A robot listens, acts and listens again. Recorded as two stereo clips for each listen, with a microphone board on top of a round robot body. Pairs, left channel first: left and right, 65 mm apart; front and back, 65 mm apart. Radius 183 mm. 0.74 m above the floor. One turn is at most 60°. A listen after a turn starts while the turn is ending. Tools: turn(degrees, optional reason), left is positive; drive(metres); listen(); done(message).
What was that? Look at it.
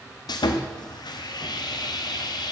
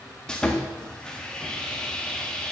turn(degrees=60, reason="The sawing: 75° left.")
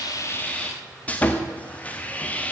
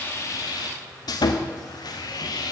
turn(degrees=20, reason="The sawing is now 20° left.")
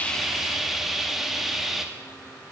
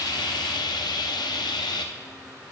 done("Found it: sawing, straight ahead.")